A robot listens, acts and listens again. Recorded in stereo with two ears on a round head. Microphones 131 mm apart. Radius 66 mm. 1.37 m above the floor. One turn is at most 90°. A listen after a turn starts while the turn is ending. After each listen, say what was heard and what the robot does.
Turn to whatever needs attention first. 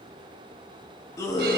The scream: about 20° left or 160° left. Turn 20° left.
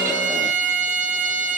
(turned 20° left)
Keep listening.
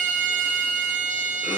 Keep listening.
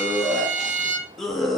Facing the scream, 1 to 2 m away.